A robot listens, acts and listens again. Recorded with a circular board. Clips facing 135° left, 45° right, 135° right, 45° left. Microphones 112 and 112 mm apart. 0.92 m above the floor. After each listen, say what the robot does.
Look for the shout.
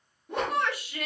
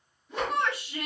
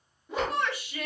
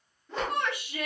Turn 20° left.
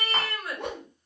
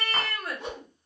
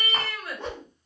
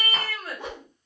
Found it: a shout, straight ahead, 1 to 2 m away.